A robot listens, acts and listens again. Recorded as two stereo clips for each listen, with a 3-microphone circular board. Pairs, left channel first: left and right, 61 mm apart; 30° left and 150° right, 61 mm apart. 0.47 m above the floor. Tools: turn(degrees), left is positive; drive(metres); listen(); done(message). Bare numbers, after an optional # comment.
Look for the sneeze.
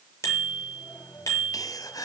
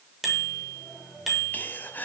# The sneeze: 90° left.
turn(90)
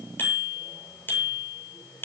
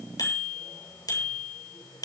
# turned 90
done("Facing where the sneeze came from. I can't hear it now.")